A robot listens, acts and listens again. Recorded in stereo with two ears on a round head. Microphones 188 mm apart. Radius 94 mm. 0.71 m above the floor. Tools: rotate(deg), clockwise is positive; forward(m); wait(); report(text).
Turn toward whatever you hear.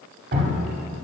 rotate(45)
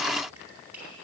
wait()
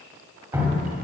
rotate(10)
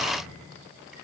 wait()
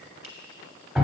report("Found it: dripping, straight ahead.")